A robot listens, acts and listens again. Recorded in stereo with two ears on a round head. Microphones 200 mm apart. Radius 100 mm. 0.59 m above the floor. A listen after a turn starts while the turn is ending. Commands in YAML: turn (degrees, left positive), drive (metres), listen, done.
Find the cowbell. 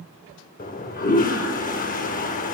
listen: true
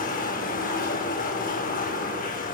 listen: true
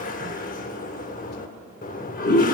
done: "I can't make out a cowbell, only a toilet flushing."